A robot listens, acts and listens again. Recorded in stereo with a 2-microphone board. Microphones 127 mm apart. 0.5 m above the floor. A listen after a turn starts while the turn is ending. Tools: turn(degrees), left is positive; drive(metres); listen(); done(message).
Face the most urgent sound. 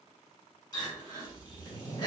turn(degrees=35)
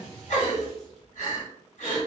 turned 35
turn(degrees=110)
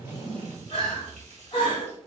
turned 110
turn(degrees=45)
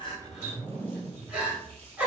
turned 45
turn(degrees=-10)
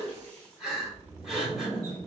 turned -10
done("Facing the crying, 1 to 2 m away.")